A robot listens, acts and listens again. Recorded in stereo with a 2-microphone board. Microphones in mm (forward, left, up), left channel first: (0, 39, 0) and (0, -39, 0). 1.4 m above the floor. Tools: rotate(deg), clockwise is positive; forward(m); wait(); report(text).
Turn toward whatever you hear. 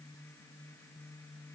wait()
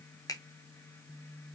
rotate(-50)
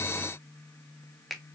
report("Found it: a finger snap, straight ahead.")